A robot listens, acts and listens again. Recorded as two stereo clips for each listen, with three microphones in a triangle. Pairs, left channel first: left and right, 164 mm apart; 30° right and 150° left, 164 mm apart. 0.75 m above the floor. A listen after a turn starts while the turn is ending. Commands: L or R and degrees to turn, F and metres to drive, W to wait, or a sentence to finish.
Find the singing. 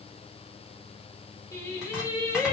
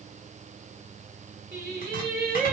L155
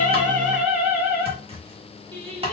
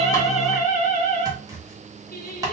R35
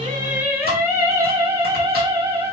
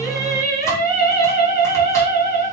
R25
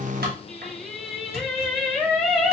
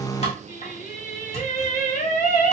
Facing the singing.